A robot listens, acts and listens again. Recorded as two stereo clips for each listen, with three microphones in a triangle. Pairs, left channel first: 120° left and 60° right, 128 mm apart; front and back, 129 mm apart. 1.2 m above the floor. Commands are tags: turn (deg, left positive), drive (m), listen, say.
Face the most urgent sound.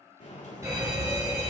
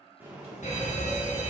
<say>Facing the fire alarm.</say>